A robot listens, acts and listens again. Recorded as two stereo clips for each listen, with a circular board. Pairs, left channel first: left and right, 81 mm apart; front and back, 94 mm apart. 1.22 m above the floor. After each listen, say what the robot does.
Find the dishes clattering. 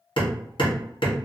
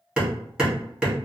Keep listening.
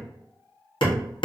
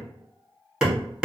Keep listening.
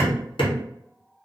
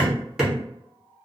I can't make out dishes clattering to turn to.